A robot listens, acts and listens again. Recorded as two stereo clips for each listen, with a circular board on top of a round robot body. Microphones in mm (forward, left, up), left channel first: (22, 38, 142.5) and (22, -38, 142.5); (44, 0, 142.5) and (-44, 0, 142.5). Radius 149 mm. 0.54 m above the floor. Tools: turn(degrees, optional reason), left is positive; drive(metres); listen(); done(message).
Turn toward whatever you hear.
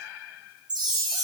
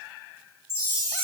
turn(degrees=-60, reason="The chime: 60° right.")
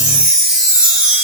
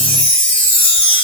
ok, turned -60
turn(degrees=-15, reason="The chime is now 15° right.")
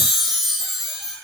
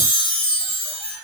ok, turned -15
done("Found it: a chime, straight ahead.")